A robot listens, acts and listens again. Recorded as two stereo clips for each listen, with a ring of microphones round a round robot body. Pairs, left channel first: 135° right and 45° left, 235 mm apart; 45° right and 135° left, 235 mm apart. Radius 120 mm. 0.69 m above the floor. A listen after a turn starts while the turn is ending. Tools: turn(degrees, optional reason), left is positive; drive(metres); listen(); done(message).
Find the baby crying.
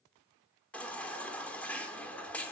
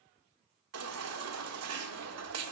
turn(degrees=140, reason="The baby crying: 140° left.")
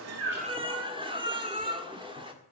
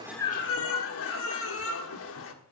turn(degrees=-20, reason="The baby crying is now 20° right.")
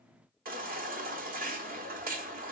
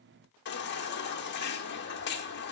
done("Found it: a baby crying, straight ahead, 1 to 2 m away.")